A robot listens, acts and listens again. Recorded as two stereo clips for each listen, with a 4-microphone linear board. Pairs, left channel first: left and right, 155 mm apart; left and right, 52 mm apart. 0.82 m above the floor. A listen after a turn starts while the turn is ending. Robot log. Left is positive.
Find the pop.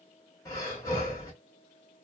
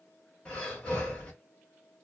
cmd idle
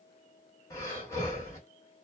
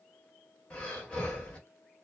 cmd idle
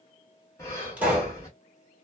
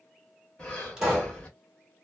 cmd yaw -30
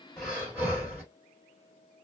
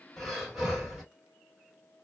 cmd idle
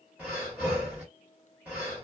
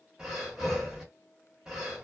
end: I heard a pop, but can't make it out now. It was about 20° left or 140° right.